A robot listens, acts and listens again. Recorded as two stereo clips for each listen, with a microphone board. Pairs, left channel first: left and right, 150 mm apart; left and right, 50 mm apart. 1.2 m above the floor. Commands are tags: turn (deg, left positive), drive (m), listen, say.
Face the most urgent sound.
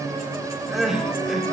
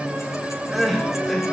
<turn deg="-30"/>
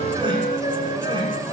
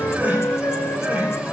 <listen/>
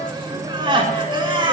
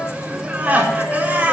<turn deg="-145"/>
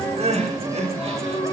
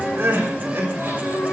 <turn deg="-50"/>
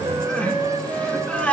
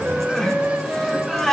<turn deg="10"/>
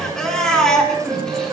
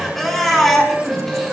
<say>Found it: crying, straight ahead.</say>